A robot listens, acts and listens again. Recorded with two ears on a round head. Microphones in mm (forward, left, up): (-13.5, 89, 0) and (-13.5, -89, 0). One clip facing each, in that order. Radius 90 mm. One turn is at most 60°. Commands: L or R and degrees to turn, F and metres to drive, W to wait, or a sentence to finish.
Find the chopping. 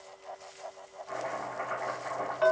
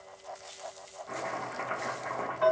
R45
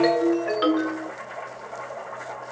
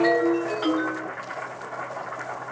R60
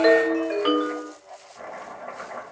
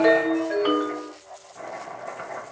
R30
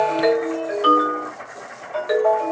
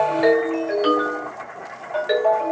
Found it: chopping, straight ahead, 1 to 2 m away.